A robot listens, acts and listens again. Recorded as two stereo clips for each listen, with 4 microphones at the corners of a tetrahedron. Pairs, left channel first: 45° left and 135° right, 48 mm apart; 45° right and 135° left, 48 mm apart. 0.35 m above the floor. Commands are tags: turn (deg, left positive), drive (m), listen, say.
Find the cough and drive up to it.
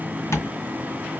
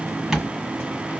<listen/>
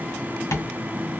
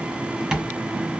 <listen/>
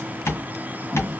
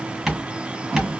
<say>I can't make out a cough to turn to.</say>